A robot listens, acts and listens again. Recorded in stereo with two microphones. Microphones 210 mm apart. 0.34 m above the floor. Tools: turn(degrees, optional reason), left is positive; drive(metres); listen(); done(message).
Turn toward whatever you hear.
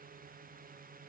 listen()
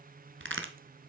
turn(degrees=-65, reason="The crack: about 65° right or 115° right.")
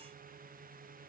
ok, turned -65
listen()
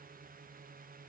done("I heard a crack, but can't make it out now. It was about straight ahead or 50° right.")